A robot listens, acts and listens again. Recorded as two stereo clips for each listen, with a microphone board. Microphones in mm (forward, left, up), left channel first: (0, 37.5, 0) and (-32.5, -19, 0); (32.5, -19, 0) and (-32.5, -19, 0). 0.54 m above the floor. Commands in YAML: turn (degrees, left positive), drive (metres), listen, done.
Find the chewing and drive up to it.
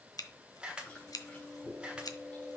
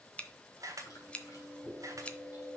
turn: -10
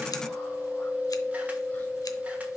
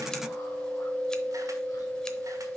drive: 1.0
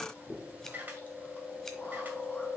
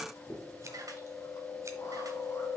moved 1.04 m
drive: 1.0
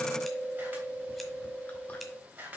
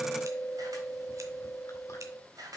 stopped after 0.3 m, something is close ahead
done: "I am next to the chewing."